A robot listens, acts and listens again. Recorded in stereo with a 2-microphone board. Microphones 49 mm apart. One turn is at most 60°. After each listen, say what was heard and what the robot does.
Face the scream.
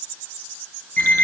Keep listening.
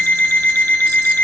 Keep listening.
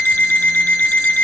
I can't make out a scream, only an alarm clock.